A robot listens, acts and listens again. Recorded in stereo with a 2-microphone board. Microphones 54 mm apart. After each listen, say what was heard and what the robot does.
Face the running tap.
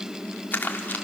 Keep listening.
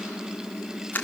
Keep listening.
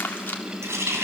The running tap: about 60° right or 120° right. Turn 60° right.
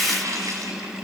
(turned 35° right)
So it is at 85° right. Turn 85° right.
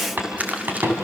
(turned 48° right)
The running tap is now 40° right. Turn 40° right.
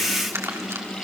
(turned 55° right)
Nothing new. It was at 15° left. Turn 15° left.
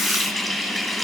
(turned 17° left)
Facing the running tap.